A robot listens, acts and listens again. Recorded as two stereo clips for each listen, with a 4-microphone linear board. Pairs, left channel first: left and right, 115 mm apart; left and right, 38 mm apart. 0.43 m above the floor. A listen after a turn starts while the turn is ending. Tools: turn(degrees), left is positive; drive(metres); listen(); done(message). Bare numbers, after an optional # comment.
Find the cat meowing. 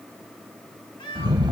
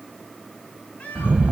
# The cat meowing: about 45° left or 135° left.
turn(45)
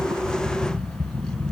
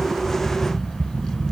listen()
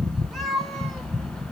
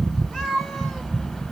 done("Found it: a cat meowing, straight ahead.")